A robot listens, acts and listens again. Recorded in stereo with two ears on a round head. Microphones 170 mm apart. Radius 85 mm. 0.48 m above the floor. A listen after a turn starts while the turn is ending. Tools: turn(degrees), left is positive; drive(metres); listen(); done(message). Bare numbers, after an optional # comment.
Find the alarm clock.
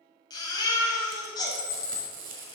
# The alarm clock: about 70° left or 110° left.
turn(70)
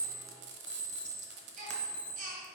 # So it is at 10° left.
turn(10)
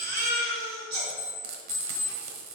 done("Facing the alarm clock.")